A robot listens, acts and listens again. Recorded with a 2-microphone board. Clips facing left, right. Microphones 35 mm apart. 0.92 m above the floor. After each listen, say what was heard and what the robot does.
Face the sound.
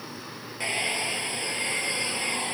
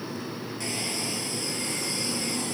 The hair dryer: about 30° left or 150° left. Turn 30° left.
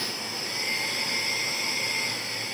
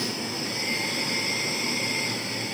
Found it: a hair dryer, straight ahead.